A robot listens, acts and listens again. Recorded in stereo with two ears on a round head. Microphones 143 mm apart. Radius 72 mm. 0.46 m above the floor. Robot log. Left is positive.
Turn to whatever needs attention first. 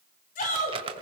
note: The shout: about 50° left or 130° left.
cmd yaw +50
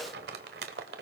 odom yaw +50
cmd idle
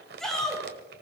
end: Found it: a shout, straight ahead, over 4 m away.